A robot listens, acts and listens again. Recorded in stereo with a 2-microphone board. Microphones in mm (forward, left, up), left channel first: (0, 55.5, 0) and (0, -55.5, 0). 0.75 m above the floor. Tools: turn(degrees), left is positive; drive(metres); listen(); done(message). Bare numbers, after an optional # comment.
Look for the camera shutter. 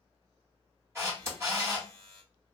# The camera shutter: about 25° right or 155° right.
turn(-25)
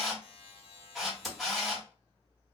done("Facing the camera shutter, 1 to 2 m away.")